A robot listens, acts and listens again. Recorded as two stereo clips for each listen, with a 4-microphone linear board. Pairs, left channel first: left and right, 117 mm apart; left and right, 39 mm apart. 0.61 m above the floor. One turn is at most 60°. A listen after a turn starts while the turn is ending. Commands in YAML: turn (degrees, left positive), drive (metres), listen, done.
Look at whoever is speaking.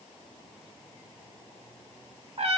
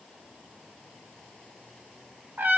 listen: true
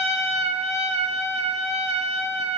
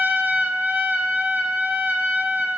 listen: true
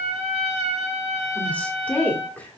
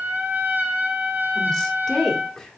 turn: 30
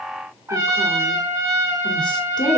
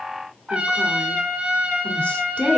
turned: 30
turn: 60
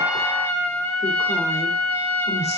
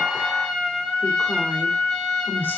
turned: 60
turn: 60
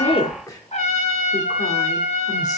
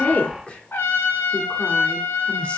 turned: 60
turn: 35
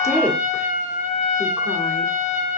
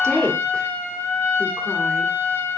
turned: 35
turn: 20
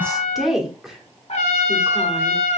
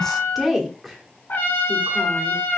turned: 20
done: "Facing the woman speaking."